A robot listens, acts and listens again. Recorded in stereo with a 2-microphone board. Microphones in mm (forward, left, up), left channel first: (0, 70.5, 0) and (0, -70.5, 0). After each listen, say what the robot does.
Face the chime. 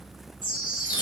Turn 35° left.
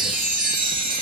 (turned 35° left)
Facing the chime, 1 to 2 m away.